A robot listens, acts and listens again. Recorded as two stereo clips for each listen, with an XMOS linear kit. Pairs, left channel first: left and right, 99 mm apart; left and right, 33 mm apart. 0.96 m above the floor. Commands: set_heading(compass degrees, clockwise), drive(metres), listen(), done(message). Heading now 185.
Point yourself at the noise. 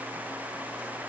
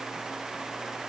listen()
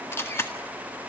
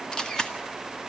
set_heading(160)
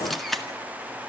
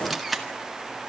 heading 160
done("Facing the camera shutter.")